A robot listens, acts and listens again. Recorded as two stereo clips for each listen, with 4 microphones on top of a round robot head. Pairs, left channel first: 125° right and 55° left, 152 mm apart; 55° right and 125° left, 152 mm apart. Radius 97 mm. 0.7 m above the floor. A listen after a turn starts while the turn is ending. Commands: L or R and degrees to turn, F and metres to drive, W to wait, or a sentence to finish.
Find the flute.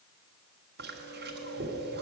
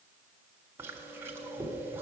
W
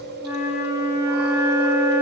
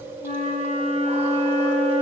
R20
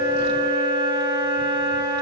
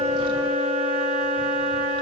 Facing the flute, 2 to 4 m away.